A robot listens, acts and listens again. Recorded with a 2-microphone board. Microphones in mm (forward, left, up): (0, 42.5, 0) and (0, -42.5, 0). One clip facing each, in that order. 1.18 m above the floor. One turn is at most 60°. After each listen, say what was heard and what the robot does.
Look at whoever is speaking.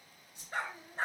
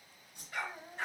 The child speaking: about 70° right or 110° right. Turn 60° right.
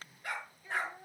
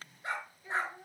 So it is at 20° right. Turn 20° right.
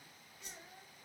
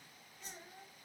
The child speaking is now 10° right. Turn 10° right.
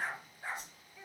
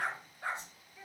Facing the child speaking, over 4 m away.